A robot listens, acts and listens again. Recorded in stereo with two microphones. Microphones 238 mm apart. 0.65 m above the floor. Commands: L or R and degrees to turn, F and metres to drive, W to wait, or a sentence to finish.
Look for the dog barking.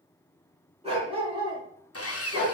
R30
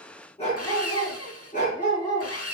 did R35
L35
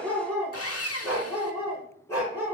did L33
L10
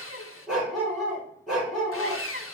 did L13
Found it: a dog barking, straight ahead, over 4 m away.